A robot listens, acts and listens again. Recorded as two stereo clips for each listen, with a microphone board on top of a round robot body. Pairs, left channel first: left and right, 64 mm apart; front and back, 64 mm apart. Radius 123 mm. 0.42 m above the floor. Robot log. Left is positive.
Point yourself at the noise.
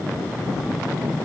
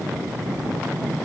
cmd idle
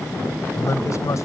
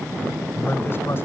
note: The man speaking: 55° left.
cmd yaw +55
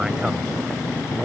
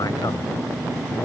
cmd idle
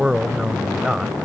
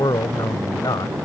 note: The man speaking is now 10° right.
cmd yaw -10
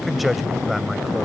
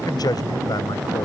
end: Facing the man speaking.